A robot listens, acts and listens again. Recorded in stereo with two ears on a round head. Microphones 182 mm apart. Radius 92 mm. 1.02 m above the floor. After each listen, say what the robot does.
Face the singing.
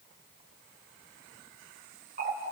Keep listening.
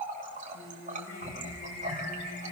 Turn 60° left.
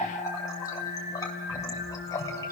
Turn 55° left.
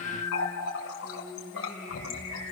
Found it: singing, straight ahead.